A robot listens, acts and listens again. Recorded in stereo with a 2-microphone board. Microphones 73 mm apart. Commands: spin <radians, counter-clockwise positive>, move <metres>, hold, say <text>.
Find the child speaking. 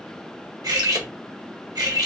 hold
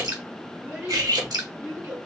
spin -0.44
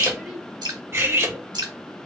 say Facing the child speaking.